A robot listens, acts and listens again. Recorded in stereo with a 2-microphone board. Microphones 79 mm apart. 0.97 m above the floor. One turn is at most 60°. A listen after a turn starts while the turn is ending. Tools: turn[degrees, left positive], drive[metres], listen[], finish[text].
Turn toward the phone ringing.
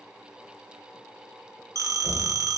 Thought: The phone ringing: about 45° right or 135° right.
Action: turn[-45]
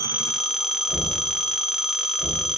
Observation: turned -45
Action: finish[Facing the phone ringing, under 1 m away.]